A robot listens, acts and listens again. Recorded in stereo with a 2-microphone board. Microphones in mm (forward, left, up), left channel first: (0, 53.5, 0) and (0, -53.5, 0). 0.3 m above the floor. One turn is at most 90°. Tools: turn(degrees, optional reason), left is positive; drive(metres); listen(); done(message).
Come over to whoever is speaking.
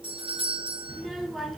turn(degrees=30)
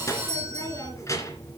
turn(degrees=90, reason="So it is at 150° left.")
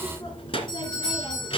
turn(degrees=65, reason="The child speaking is now 65° left.")
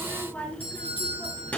turn(degrees=15, reason="The child speaking is now 15° left.")
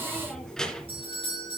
drive(metres=1.0)
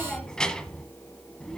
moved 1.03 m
turn(degrees=10, reason="The child speaking is now 10° left.")
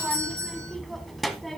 drive(metres=1.0)
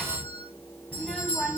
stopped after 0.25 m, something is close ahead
done("Arrived at the child speaking, straight ahead.")